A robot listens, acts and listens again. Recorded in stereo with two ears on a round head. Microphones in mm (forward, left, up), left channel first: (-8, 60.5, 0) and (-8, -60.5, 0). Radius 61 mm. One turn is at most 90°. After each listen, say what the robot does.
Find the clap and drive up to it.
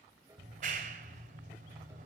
Turn 65° right.
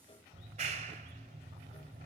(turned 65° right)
Turn 50° right.
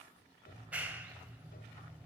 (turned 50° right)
Turn 10° right.
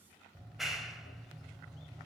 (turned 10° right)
Drive 1.0 m forward.
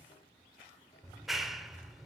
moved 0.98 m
Drive 1.0 m forward.
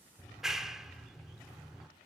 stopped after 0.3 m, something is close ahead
Arrived at the clap, straight ahead.